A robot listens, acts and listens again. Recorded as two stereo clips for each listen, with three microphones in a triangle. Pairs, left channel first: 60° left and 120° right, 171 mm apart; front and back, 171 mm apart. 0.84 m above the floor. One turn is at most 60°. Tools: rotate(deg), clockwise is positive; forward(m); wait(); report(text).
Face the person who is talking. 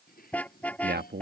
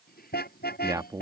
rotate(60)
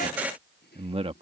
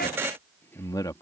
rotate(60)
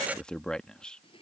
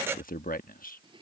rotate(25)
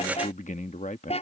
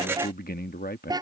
rotate(-20)
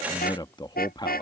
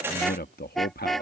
report("Found it: a man speaking, straight ahead.")